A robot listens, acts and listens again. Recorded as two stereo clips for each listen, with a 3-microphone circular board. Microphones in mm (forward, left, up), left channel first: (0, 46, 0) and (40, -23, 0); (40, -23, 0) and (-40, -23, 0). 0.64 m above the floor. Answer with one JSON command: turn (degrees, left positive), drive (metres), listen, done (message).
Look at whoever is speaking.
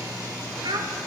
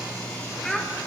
{"turn": -85}
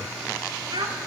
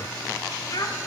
{"turn": -40}
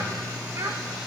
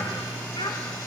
{"turn": -10}
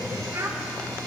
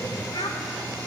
{"done": "Facing the child speaking, 1 to 2 m away."}